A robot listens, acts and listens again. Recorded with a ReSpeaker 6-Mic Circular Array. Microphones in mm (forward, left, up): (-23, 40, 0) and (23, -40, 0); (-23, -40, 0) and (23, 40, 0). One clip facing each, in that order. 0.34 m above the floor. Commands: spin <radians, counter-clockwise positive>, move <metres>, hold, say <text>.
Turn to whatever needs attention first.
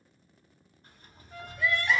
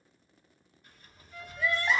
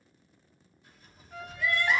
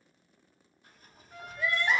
say Facing the crying.